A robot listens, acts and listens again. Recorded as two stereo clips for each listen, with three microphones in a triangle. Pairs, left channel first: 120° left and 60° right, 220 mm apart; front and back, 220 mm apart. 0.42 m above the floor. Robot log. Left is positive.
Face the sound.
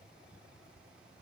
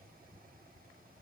cmd idle
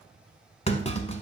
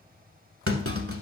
note: The clunk: 175° right.
cmd yaw -175
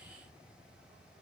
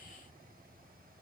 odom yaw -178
end: Facing where the clunk came from. I can't hear it now.